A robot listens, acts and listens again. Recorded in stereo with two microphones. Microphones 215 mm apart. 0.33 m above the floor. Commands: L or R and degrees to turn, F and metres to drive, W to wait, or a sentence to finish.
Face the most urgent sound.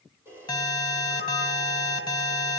L20
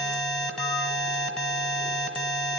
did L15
Facing the alarm.